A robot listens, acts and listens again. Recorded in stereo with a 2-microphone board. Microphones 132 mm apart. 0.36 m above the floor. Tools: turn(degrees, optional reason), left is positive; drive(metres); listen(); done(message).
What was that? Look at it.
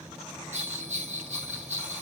turn(degrees=-55, reason="The bell: about 55° right or 125° right.")
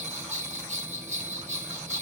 turn(degrees=-65, reason="So it is at 65° right.")
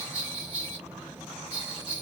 turn(degrees=-10, reason="The bell is now 10° right.")
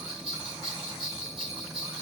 done("Facing the bell, 2 to 4 m away.")